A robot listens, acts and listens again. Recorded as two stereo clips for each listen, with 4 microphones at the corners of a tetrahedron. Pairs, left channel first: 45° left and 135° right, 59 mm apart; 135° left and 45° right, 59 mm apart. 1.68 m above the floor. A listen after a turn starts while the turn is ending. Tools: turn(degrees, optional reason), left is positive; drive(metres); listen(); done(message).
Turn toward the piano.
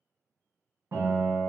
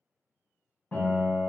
turn(degrees=-170, reason="The piano: 170° right.")
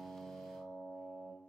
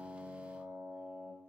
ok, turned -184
turn(degrees=15, reason="The piano is now 15° left.")
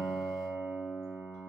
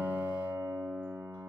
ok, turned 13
done("Found it: a piano, straight ahead.")